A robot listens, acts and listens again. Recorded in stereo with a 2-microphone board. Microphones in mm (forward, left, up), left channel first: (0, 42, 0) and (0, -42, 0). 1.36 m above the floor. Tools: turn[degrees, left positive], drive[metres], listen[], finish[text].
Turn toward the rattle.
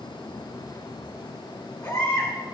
Action: listen[]
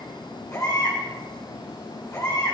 Action: listen[]
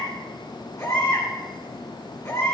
Action: finish[I can't make out a rattle to turn to.]